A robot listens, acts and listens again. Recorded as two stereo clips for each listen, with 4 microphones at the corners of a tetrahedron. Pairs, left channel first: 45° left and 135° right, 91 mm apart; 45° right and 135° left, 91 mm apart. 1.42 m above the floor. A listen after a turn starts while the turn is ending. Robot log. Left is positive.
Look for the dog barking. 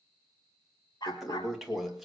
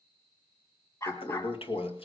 end: Facing the dog barking, over 4 m away.